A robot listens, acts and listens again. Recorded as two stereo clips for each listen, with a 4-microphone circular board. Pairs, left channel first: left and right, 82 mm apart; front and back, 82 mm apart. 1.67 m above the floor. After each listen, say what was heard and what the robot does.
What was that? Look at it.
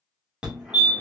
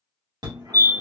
The fire alarm: 170° right. Turn 170° right.
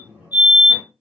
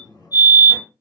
The fire alarm is now 25° right. Turn 25° right.
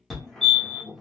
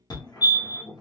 Facing the fire alarm.